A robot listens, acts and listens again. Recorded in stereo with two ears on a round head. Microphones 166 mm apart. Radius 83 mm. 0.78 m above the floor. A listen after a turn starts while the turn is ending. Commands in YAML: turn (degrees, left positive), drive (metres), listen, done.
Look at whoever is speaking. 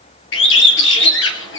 listen: true
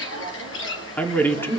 turn: 30
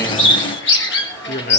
turn: 130
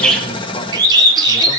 listen: true
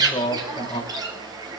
turn: 25
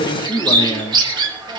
turn: 20
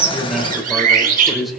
done: "Found it: a man speaking, straight ahead, 2 to 4 m away."